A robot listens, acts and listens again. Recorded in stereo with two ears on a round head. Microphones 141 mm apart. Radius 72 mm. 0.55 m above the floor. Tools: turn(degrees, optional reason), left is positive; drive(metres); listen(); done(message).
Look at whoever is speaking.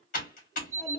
turn(degrees=30)
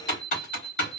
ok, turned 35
listen()
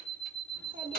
turn(degrees=-30, reason="So it is at 30° right.")
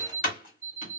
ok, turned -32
listen()
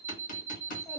done("Found it: a child speaking, straight ahead, under 1 m away.")